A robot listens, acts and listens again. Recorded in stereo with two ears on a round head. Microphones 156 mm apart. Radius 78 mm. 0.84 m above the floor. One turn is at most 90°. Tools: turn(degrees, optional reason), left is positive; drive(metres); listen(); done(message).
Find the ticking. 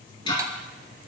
turn(degrees=30, reason="The ticking: about 30° left or 150° left.")
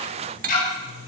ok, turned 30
turn(degrees=90, reason="So it is at 120° left.")
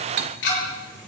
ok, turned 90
turn(degrees=70, reason="The ticking is now 70° left.")
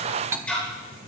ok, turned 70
done("Facing the ticking, over 4 m away.")